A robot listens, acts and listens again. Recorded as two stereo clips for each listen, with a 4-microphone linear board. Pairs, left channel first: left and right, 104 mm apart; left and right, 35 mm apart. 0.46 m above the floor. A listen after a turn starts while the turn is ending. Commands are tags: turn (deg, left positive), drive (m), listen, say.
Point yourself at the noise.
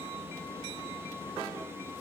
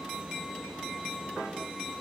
<listen/>
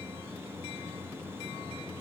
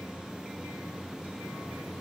<listen/>
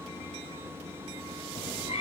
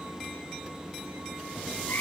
<turn deg="90"/>
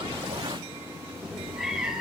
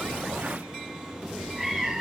<say>Facing the cat meowing.</say>